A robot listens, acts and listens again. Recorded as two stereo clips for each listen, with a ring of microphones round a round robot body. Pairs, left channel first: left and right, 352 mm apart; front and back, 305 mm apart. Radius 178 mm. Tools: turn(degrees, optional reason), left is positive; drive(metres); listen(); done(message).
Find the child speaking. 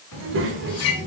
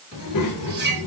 turn(degrees=-25, reason="The child speaking: 25° right.")
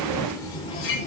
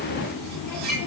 turn(degrees=25, reason="The child speaking is now 25° left.")
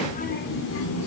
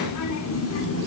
turn(degrees=45, reason="The child speaking is now 45° left.")
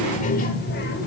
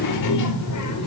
turn(degrees=30, reason="The child speaking is now 30° left.")
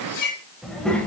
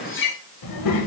done("Found it: a child speaking, straight ahead, 2 to 4 m away.")